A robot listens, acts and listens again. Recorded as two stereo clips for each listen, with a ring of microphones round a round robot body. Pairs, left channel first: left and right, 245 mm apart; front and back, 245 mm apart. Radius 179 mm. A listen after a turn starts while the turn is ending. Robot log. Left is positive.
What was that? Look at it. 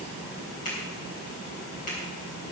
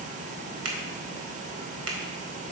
note: The finger snap: 160° left.
cmd yaw +160
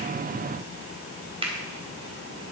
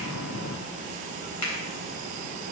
note: The finger snap is now 20° right.
cmd yaw -20
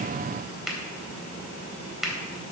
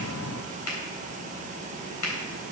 end: Found it: a finger snap, straight ahead, 2 to 4 m away.